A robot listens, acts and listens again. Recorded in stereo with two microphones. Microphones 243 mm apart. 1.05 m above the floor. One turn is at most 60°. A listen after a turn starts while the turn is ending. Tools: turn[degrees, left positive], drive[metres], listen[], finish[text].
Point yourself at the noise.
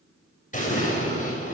Thought: The explosion: about 30° left or 150° left.
Action: turn[30]
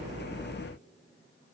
Action: listen[]
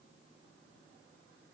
Action: finish[I heard an explosion, but can't make it out now. It was about straight ahead or 120° left.]